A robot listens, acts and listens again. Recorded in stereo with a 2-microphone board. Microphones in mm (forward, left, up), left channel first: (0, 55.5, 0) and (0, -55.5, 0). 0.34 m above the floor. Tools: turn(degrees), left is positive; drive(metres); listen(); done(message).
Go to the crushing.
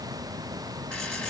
listen()
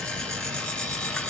listen()
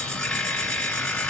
done("I can't make out crushing to turn to.")